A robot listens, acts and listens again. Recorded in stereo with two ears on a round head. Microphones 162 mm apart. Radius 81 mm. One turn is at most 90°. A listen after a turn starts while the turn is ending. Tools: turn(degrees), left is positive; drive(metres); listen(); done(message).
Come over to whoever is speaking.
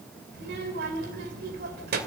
turn(degrees=-60)
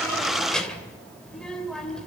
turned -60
drive(metres=1.0)
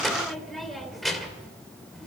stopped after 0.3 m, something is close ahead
done("Blocked. The child speaking is further on, straight ahead.")